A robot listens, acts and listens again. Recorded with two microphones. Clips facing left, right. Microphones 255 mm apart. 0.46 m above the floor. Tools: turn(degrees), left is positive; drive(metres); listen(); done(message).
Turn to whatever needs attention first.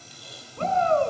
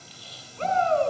turn(degrees=55)
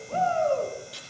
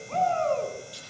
done("Facing the shout.")